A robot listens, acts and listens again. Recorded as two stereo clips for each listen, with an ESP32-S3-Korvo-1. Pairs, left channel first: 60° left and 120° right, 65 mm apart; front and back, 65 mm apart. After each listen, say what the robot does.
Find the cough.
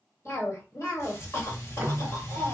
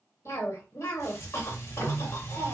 Turn 30° left.
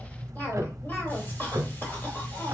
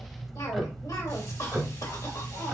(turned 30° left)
Found it: a cough, straight ahead.